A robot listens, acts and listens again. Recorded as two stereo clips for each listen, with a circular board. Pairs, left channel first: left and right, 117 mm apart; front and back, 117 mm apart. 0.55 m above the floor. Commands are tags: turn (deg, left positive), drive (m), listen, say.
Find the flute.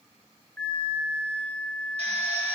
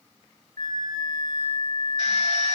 <turn deg="170"/>
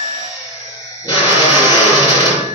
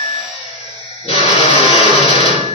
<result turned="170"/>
<turn deg="-40"/>
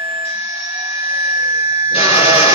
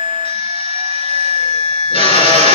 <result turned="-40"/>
<turn deg="-25"/>
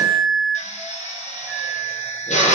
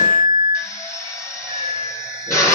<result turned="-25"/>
<say>Found it: a flute, straight ahead.</say>